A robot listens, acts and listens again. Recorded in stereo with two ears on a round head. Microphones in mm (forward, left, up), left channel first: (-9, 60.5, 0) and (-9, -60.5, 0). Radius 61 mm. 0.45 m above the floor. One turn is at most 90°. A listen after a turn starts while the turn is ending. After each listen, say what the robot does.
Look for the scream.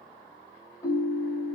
Keep listening.
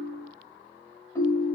Keep listening.
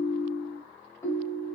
I can't make out a scream, only a ringtone.